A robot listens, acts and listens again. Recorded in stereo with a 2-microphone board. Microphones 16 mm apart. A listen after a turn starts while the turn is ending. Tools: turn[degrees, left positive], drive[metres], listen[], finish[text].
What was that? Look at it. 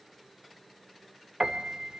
Thought: The piano: about 55° right or 125° right.
Action: turn[-55]
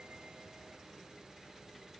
Action: listen[]
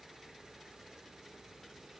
Action: listen[]
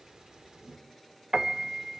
Thought: So it is at 65° right.
Action: turn[-65]
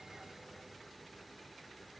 Action: listen[]
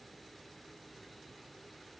Action: listen[]
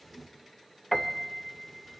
Action: finish[Found it: a piano, straight ahead.]